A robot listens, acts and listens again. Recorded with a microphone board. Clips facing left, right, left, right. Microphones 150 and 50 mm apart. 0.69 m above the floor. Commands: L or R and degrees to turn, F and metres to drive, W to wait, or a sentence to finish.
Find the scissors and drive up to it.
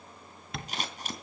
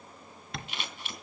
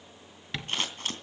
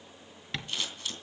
L40
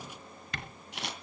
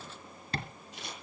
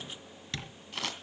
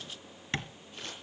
L100
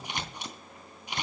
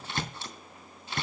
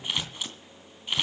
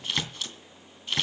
L15
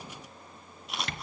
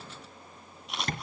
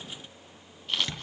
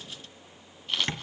F1.0
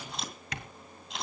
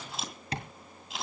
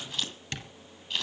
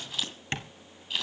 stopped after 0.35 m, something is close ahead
Something is in my way. I am facing the scissors but have not reached it.